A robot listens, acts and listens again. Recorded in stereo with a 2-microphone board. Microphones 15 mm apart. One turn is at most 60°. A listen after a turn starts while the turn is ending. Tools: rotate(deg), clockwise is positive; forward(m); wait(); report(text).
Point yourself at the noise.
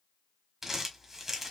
rotate(20)
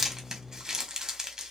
rotate(60)
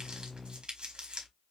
rotate(60)
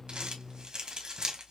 rotate(55)
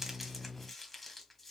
wait()
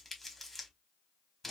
rotate(-10)
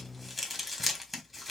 report("Found it: crumpling, straight ahead, 1 to 2 m away.")